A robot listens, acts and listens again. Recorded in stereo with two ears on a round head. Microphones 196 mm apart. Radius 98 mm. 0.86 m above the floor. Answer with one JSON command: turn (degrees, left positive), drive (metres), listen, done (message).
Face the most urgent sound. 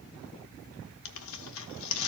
{"listen": true}
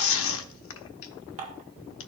{"listen": true}
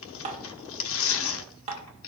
{"done": "I can't make out anything urgent, only tearing paper and dishes clattering."}